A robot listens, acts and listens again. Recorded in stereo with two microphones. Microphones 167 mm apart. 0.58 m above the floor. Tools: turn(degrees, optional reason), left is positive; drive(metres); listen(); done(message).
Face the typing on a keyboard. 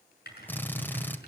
turn(degrees=70, reason="The typing on a keyboard: about 70° left or 110° left.")
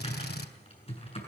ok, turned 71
turn(degrees=35, reason="So it is at 35° left.")
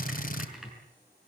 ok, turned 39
done("Facing the typing on a keyboard, over 4 m away.")